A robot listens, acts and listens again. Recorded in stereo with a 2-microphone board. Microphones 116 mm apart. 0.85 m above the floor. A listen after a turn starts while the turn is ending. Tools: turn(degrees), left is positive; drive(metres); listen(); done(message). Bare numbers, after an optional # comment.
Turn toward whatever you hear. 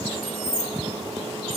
turn(-90)
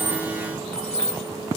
done("Found it: keys jangling, straight ahead, over 4 m away.")